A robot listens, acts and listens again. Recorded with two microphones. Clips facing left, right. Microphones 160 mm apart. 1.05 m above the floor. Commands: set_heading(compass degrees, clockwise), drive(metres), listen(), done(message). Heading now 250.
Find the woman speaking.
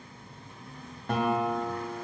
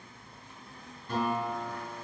listen()
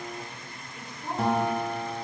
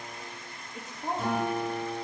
set_heading(295)
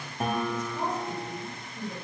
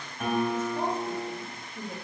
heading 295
set_heading(330)
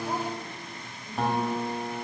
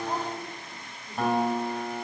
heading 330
listen()
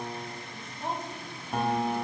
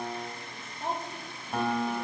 done("Found it: a woman speaking, straight ahead.")